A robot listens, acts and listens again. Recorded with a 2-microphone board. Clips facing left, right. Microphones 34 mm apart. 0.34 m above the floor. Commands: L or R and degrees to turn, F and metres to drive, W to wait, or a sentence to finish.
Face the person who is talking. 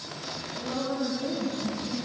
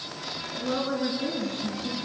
R45
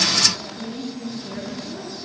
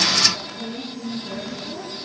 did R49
Found it: a woman speaking, straight ahead.